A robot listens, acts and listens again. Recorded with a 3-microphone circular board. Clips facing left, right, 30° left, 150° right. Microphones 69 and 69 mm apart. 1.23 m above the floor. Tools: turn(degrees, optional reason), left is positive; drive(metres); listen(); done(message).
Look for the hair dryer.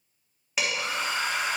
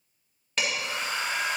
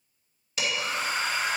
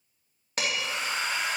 turn(degrees=70, reason="The hair dryer: 70° left.")
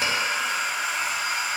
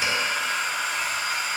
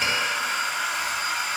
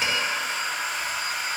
turn(degrees=15, reason="The hair dryer is now 15° left.")
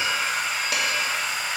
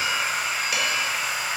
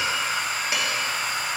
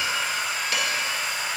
done("Facing the hair dryer.")